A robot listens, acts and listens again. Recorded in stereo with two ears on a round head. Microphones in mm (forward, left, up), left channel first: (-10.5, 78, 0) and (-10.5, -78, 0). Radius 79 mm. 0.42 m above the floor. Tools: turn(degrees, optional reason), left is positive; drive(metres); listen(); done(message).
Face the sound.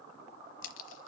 turn(degrees=90)
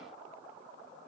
done("Facing where the crack came from. I can't hear it now.")